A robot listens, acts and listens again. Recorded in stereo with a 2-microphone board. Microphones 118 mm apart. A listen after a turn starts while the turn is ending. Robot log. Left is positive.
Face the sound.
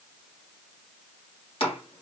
note: The chopping: about 55° left or 125° left.
cmd yaw +55
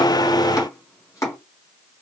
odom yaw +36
note: So it is at 35° left.
cmd yaw +35
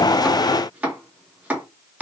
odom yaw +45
note: The chopping is now 15° right.
cmd yaw -15
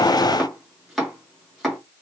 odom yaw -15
end: Facing the chopping.